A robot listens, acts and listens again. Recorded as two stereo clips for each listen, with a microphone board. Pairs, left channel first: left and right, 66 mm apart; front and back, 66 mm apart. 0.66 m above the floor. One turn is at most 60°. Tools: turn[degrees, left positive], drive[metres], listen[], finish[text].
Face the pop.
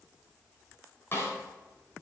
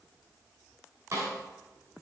Action: listen[]
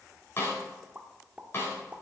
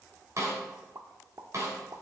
Thought: The pop: 155° right.
Action: turn[-60]
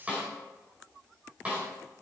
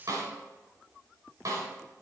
Thought: Nothing new. It was at 95° right.
Action: turn[-60]
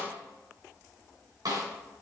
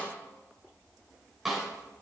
Thought: Nothing new. It was at 35° right.
Action: turn[-35]
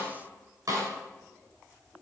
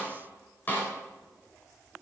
Action: finish[I heard a pop from this way, but can't make it out now.]